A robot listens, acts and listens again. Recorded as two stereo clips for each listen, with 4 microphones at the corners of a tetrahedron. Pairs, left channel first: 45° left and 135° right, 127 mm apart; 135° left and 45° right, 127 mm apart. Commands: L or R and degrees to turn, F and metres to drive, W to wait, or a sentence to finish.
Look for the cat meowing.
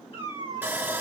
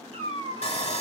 Found it: a cat meowing, straight ahead.